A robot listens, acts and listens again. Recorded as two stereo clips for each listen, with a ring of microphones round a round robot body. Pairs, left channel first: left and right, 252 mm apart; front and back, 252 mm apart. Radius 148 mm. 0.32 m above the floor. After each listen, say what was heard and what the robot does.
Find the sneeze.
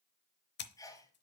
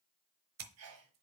The sneeze: 165° left. Turn 165° left.
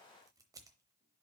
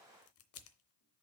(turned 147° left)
Nothing new. It was at 20° left. Turn 20° left.
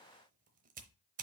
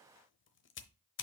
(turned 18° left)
Facing where the sneeze came from. I can't hear it now.